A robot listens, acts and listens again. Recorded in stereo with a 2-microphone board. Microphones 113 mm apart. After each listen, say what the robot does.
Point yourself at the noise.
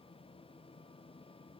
Keep listening.
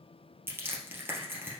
Turn 20° right.
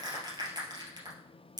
Turn 140° right.
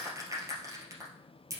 Turn 30° right.
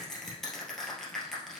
Facing the crushing.